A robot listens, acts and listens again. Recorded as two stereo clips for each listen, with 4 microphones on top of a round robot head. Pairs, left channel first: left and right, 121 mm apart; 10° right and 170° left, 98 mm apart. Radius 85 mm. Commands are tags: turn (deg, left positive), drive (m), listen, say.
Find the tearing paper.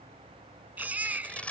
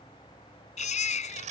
<turn deg="170"/>
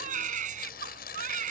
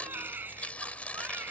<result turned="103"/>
<turn deg="65"/>
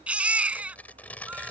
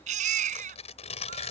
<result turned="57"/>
<turn deg="10"/>
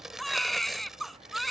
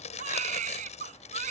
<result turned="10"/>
<say>Found it: tearing paper, straight ahead.</say>